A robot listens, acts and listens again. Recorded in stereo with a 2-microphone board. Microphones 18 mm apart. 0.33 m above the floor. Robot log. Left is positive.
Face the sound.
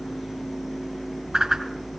note: The whoosh: about 35° right or 145° right.
cmd yaw -35
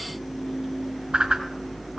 note: So it is at 110° right.
cmd yaw -110
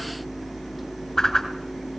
note: The whoosh is now 30° left.
cmd yaw +30
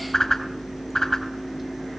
note: The whoosh is now 25° left.
cmd yaw +25
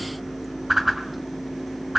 note: The whoosh is now 20° right.
cmd yaw -20
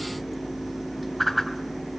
end: Facing the whoosh.